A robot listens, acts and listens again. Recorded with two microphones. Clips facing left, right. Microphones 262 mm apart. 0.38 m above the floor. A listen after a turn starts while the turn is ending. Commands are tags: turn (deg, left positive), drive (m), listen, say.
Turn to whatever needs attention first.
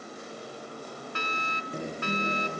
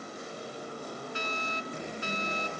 <turn deg="70"/>
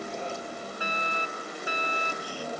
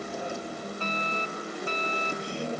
<turn deg="10"/>
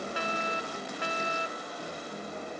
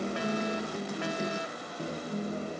<say>Found it: a fire alarm, straight ahead.</say>